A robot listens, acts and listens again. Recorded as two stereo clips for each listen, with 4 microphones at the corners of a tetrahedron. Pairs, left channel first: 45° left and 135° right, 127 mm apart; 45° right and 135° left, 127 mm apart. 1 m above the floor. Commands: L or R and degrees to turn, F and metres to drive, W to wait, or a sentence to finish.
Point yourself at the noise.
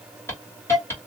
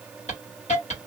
R25
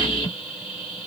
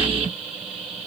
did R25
Found it: a hiss, straight ahead, 1 to 2 m away.